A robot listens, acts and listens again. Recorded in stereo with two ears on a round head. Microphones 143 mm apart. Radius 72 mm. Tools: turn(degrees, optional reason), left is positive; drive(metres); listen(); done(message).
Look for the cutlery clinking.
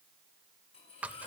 turn(degrees=35, reason="The cutlery clinking: about 35° left or 145° left.")
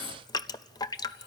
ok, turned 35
turn(degrees=110, reason="So it is at 110° left.")
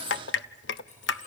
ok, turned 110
turn(degrees=45, reason="The cutlery clinking is now 45° left.")
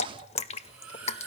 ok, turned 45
done("Facing the cutlery clinking.")